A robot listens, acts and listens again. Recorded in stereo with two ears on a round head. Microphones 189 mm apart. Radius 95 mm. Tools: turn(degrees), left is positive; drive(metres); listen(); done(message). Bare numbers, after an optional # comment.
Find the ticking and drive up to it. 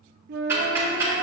turn(-30)
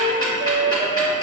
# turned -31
# So it is at 20° left.
turn(20)
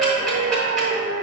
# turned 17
drive(1.0)
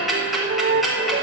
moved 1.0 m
drive(1.0)
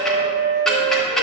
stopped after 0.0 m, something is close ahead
done("Arrived at the ticking, straight ahead.")